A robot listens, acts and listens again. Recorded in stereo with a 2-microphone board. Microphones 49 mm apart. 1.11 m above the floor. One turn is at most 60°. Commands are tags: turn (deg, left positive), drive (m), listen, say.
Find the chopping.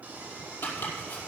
<turn deg="45"/>
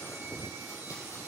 <listen/>
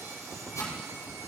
<turn deg="60"/>
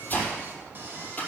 <turn deg="30"/>
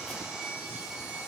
<listen/>
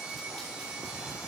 <listen/>
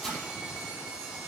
<say>Facing the chopping.</say>